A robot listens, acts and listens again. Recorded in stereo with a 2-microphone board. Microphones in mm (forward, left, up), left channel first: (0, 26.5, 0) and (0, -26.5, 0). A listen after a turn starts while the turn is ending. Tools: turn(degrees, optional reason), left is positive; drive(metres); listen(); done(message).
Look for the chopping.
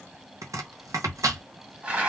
turn(degrees=-90)
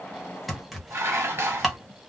done("Found it: chopping, straight ahead, under 1 m away.")